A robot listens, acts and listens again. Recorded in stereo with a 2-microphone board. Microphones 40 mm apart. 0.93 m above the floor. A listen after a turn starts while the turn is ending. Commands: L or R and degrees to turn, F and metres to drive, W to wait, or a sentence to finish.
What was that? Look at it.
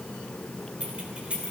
R30
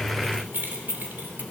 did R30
R120
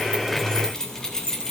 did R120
L15
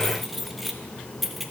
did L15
Found it: keys jangling, straight ahead.